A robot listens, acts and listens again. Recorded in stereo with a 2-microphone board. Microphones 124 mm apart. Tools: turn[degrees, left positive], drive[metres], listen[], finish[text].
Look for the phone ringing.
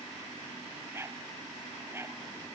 Action: listen[]
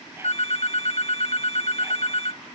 Thought: The phone ringing: about 55° left or 125° left.
Action: turn[55]
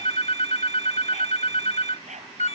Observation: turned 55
Thought: So it is at 65° left.
Action: turn[65]
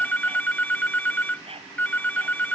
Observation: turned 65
Thought: The phone ringing is now 15° left.
Action: turn[15]
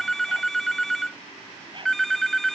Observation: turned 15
Action: finish[Found it: a phone ringing, straight ahead.]